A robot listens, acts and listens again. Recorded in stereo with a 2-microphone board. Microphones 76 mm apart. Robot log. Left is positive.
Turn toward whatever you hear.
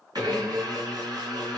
note: The blender: about 60° right or 120° right.
cmd yaw -60
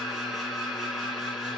end: Found it: a blender, straight ahead, 2 to 4 m away.